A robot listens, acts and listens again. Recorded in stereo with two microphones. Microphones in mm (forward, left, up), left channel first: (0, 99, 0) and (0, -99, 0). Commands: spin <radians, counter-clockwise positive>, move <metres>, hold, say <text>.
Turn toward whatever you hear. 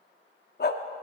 spin 0.96
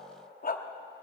spin 0.96
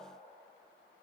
hold
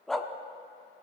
say Found it: a dog barking, straight ahead, under 1 m away.